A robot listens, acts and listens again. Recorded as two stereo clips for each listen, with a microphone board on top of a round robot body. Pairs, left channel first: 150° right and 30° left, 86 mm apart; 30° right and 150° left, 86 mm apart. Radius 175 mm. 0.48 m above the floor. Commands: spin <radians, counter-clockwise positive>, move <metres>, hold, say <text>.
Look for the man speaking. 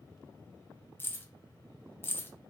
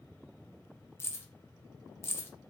hold
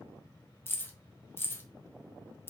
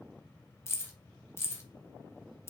hold
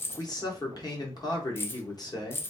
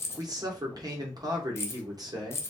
spin 3.14
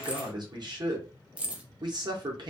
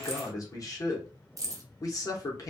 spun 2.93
spin 0.17
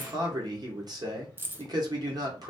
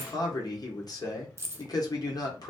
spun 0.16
say Found it: a man speaking, straight ahead.